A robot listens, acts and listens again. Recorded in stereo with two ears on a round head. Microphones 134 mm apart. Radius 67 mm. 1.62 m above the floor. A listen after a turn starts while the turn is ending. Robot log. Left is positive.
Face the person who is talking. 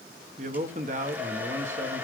note: The man speaking: about 50° right or 130° right.
cmd yaw -50
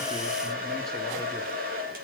cmd idle
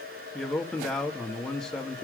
end: Found it: a man speaking, straight ahead.